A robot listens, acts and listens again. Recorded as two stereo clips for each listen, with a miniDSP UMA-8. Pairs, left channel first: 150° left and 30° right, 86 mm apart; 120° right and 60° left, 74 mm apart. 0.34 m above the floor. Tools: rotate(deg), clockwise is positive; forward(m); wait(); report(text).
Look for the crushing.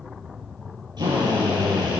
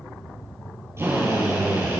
wait()
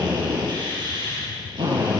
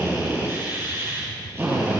wait()
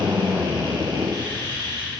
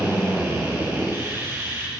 report("I can't make out crushing to turn to.")